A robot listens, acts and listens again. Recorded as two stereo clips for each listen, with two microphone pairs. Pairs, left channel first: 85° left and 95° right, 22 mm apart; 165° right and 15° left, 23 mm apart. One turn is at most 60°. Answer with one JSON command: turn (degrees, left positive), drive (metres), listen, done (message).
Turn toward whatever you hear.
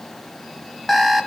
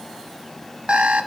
{"done": "Found it: an alarm clock, straight ahead."}